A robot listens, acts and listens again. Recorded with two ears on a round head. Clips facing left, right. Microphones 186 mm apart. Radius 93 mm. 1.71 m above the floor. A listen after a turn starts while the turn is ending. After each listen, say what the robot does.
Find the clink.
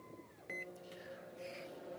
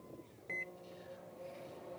Keep listening.
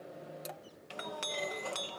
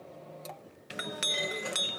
Turn 25° right.
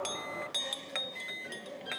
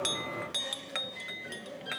Found it: a clink, straight ahead.